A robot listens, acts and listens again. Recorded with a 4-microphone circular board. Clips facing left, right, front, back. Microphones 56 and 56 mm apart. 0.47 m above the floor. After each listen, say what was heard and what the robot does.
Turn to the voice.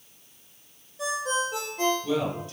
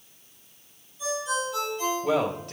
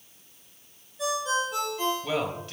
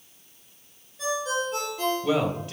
The man speaking: 100° right. Turn 100° right.
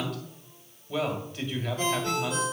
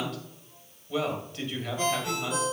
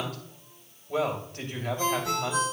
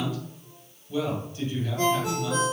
Facing the man speaking, 2 to 4 m away.